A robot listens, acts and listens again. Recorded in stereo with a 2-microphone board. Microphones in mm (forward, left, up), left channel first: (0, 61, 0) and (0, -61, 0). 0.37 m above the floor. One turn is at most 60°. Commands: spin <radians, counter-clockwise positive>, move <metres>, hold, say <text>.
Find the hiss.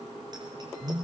hold
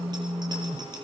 hold
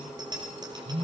say I can't make out a hiss, only a phone buzzing.